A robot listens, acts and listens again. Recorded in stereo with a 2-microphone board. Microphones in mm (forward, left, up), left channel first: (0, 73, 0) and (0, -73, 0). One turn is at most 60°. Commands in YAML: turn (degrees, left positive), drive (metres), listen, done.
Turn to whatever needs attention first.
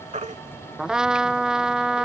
turn: -55
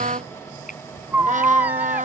turn: -15
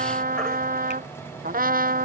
listen: true
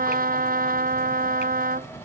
listen: true
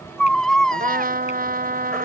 done: "Facing the baby crying."